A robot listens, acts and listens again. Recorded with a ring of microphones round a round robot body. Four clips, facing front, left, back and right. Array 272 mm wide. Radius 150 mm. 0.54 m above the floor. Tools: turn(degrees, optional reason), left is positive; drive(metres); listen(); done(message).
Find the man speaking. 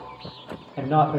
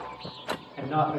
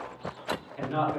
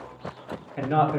turn(degrees=-30, reason="The man speaking: 30° right.")
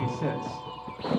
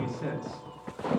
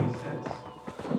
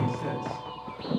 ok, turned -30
done("Found it: a man speaking, straight ahead.")